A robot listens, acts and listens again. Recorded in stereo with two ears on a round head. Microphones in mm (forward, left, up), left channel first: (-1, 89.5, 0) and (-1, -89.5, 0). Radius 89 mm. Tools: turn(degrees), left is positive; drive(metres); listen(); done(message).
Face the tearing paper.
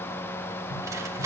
turn(degrees=-15)
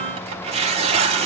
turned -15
turn(degrees=-145)
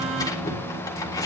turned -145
turn(degrees=20)
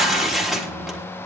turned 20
done("Facing the tearing paper.")